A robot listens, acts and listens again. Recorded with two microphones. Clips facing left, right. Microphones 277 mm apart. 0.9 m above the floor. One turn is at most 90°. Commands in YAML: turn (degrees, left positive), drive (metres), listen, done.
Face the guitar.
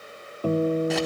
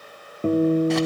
turn: -25
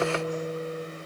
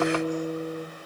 turn: -90
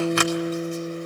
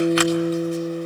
turn: -35
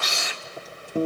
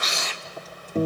turn: 10
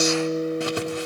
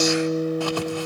done: "Found it: a guitar, straight ahead."